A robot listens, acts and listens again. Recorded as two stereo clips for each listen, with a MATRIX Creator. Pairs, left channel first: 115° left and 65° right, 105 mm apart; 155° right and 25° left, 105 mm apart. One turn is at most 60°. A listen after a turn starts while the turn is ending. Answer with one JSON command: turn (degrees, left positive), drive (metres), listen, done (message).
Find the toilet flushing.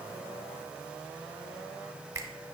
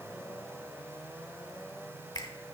{"listen": true}
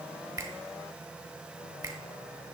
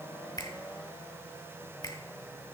{"listen": true}
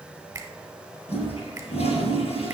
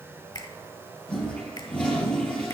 {"turn": 60}
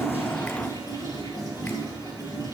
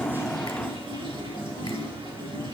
{"turn": 60}
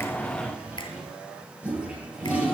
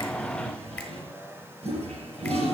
{"turn": 10}
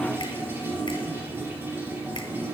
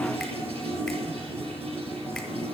{"done": "Found it: a toilet flushing, straight ahead."}